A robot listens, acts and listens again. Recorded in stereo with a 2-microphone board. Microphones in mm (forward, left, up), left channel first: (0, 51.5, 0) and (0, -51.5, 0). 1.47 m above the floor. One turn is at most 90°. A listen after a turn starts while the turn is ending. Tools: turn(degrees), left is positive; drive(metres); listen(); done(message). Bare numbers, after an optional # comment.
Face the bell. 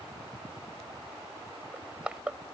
listen()
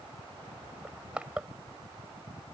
listen()
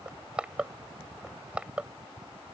done("I can't make out a bell to turn to.")